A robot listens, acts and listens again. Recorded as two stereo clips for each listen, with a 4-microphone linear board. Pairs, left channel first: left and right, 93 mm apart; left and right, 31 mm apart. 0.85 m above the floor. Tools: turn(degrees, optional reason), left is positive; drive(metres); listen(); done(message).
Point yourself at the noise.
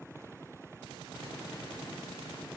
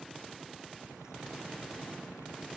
listen()
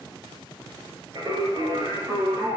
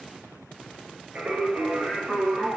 turn(degrees=-45, reason="The singing: about 45° right or 135° right.")
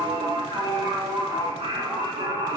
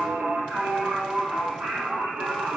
turn(degrees=-100, reason="So it is at 100° right.")
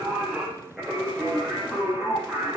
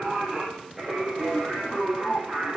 done("Found it: singing, straight ahead, over 4 m away.")